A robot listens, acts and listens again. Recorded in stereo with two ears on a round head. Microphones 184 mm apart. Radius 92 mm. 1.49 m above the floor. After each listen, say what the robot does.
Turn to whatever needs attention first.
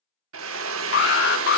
Turn 55° left.
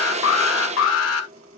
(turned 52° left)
Turn 75° left.
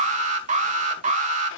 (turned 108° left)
Turn 35° right.
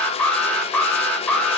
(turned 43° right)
Facing the alarm, 1 to 2 m away.